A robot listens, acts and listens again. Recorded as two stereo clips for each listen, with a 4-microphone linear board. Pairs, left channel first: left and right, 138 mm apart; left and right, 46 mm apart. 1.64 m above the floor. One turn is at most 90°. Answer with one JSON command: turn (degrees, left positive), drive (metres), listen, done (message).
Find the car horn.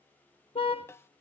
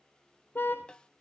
{"turn": 45}
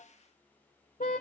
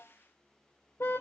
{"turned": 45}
{"turn": 90}
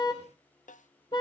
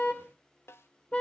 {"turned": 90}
{"turn": 35}
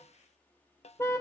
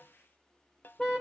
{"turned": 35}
{"turn": 20}
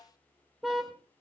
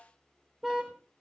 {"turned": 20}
{"done": "Facing the car horn."}